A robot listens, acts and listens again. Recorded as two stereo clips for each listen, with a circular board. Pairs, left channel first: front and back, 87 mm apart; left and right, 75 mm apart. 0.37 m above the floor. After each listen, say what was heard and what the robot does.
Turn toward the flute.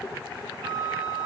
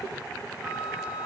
The flute: 160° right. Turn 160° right.
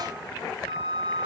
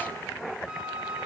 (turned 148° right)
The flute is now 10° right. Turn 10° right.
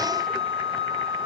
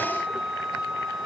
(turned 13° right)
Facing the flute, under 1 m away.